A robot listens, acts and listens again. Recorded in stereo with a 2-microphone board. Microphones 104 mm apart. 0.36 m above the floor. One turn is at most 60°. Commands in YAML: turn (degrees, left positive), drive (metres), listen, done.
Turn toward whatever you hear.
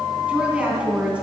turn: -30
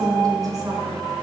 turn: -60
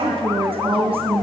turn: -60
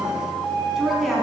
done: "Found it: a woman speaking, straight ahead."